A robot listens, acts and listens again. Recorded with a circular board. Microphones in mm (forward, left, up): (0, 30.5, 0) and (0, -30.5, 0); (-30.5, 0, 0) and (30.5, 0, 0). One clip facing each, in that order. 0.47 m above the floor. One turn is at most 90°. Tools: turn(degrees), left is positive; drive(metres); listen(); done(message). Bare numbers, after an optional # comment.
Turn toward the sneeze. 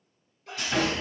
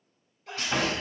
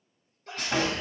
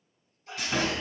# The sneeze: straight behind.
turn(90)
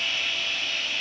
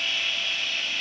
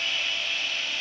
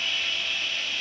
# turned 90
# Nothing new. It was at 90° left.
turn(90)
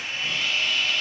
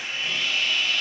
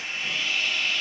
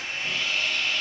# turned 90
done("I heard a sneeze from this way, but can't make it out now.")